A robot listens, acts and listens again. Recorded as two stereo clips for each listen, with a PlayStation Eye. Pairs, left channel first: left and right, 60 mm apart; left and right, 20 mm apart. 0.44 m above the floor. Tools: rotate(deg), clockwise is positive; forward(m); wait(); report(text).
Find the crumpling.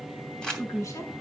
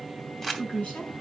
rotate(-30)
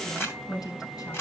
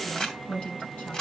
rotate(-135)
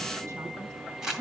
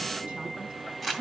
rotate(10)
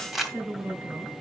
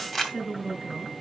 report("Facing the crumpling.")